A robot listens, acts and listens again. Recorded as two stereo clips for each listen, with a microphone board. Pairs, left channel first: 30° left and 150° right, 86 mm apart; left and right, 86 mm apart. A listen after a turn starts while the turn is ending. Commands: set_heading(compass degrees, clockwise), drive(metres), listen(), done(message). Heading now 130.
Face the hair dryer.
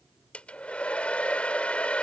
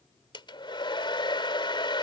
set_heading(25)
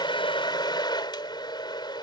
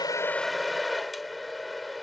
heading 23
done("Facing the hair dryer.")